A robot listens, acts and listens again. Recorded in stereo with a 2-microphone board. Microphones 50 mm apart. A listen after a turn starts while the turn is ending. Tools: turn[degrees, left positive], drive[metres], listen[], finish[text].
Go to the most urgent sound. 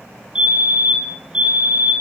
Thought: The fire alarm: about 15° right or 165° right.
Action: turn[-15]
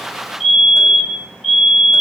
Action: drive[1.0]
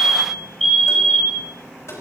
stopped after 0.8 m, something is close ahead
Thought: The fire alarm is now 10° left.
Action: turn[10]
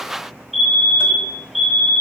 Action: finish[Blocked. The fire alarm is further on, straight ahead.]